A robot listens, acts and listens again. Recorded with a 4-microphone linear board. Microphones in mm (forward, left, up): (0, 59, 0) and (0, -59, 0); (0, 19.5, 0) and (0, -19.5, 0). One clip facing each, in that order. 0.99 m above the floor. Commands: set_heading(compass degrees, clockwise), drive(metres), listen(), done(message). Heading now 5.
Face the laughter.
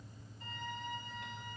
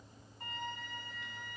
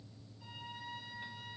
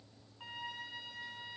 listen()
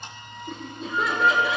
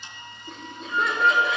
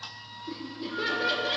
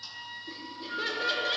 set_heading(335)
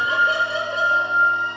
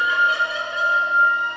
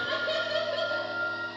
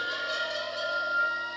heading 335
set_heading(185)
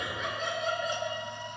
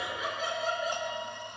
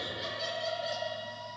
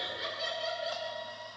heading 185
done("Facing the laughter.")